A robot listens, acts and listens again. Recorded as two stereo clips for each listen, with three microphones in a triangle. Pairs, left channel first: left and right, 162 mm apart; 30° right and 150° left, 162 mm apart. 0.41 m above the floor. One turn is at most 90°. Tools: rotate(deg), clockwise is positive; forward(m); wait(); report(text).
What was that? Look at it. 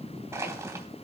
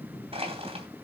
rotate(90)
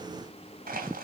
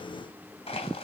rotate(80)
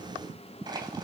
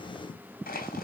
rotate(30)
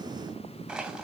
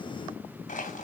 report("Found it: crushing, straight ahead.")